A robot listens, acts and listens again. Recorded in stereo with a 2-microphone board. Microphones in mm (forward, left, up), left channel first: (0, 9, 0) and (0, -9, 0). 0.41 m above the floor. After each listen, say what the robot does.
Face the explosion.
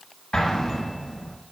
Turn 55° left.
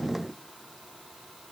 Keep listening.
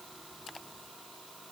I heard an explosion, but can't make it out now. It was about straight ahead or 70° left.